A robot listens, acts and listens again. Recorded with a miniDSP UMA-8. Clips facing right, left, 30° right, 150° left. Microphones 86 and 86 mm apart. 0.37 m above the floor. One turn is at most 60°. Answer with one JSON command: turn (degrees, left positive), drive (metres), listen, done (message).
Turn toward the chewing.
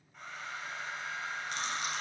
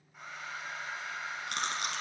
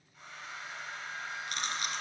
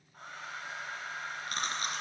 {"turn": 60}
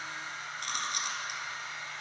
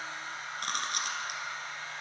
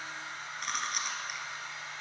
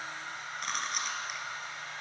{"turn": 55}
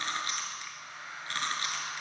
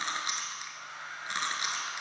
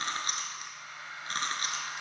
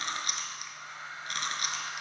{"turn": 20}
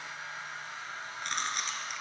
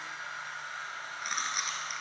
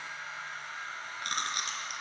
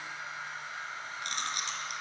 {"done": "Found it: chewing, straight ahead, under 1 m away."}